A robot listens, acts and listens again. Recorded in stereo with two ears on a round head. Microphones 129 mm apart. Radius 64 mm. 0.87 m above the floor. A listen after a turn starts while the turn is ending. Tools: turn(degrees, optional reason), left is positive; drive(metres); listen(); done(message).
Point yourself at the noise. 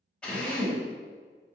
turn(degrees=30)
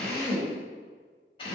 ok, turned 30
turn(degrees=145, reason="So it is at 145° left.")
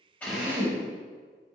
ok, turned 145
turn(degrees=-15, reason="The drill is now 15° right.")
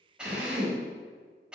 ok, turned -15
done("Found it: a drill, straight ahead, 1 to 2 m away.")